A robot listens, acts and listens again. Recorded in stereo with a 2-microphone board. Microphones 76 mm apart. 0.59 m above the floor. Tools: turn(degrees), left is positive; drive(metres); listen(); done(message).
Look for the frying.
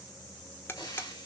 turn(degrees=65)
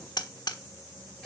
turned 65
done("Facing the frying, over 4 m away.")